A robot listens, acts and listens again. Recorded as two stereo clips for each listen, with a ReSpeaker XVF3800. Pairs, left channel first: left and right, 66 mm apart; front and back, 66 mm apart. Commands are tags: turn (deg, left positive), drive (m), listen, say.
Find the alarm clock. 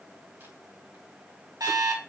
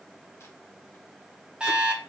<turn deg="-105"/>
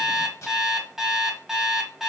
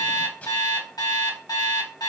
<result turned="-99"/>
<say>Facing the alarm clock, 1 to 2 m away.</say>